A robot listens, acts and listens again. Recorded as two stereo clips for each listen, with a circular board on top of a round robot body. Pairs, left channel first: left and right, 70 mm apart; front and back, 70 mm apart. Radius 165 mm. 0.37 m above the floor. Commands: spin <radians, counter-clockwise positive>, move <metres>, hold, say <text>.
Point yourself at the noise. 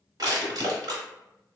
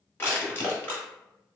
spin -1.05
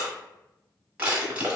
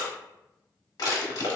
spin -0.35
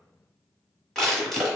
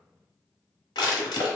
say Found it: crushing, straight ahead.